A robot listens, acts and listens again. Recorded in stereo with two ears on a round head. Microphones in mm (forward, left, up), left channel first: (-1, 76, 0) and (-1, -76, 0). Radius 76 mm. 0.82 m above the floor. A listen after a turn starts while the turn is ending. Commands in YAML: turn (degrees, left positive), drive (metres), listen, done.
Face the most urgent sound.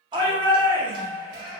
turn: -25
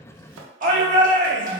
turn: -130
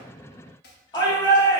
turn: 25
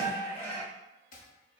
turn: 15
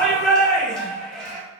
done: "Found it: a shout, straight ahead."